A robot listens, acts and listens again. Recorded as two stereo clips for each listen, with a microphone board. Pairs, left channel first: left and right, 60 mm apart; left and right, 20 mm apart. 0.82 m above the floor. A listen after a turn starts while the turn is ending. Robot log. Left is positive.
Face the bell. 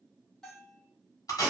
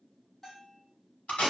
cmd yaw +30
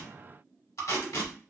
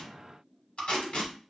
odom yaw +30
cmd idle
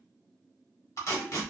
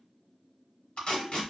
cmd idle
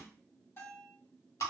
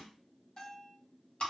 note: So it is at 140° left.
cmd yaw +140
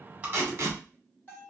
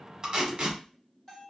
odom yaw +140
note: The bell is now 30° left.
cmd yaw +30
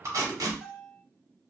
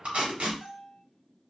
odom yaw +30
end: Facing the bell, 1 to 2 m away.